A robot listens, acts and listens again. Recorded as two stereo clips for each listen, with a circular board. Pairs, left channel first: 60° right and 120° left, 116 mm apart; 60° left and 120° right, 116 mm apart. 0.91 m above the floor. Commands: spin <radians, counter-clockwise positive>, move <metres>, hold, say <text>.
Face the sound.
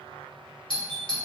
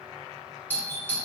spin -0.26
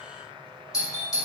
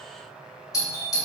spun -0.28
say Facing the doorbell, 2 to 4 m away.